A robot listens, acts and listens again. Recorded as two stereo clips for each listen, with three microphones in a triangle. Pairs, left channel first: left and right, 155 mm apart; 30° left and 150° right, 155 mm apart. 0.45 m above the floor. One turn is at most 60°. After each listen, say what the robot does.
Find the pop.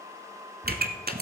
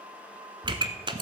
Turn 60° right.
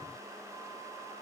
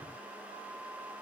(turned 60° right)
Turn 30° right.
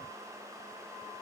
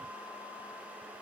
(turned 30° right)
Facing where the pop came from. I can't hear it now.